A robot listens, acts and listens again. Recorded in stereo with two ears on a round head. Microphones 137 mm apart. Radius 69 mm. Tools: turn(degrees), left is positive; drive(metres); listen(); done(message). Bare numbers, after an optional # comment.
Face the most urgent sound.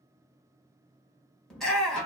turn(30)
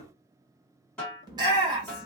# So it is at 30° right.
turn(-30)
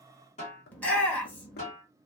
# The shout is now 10° left.
turn(10)
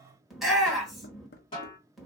done("Facing the shout, 1 to 2 m away.")